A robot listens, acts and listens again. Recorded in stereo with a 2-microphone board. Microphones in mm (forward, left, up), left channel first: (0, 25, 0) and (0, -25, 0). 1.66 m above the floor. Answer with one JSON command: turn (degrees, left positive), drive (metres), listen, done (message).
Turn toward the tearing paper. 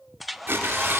{"turn": -45}
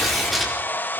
{"done": "Found it: tearing paper, straight ahead, over 4 m away."}